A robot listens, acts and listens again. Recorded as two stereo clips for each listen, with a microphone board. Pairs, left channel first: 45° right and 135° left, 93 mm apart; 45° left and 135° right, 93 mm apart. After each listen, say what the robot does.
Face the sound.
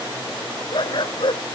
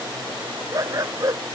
Turn 80° right.
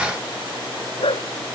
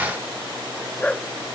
Turn 30° right.
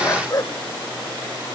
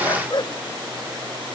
Turn 10° left.
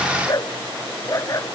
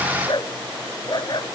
Turn 10° left.
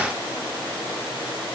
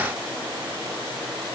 Keep listening.
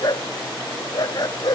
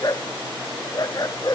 Found it: a dog barking, straight ahead.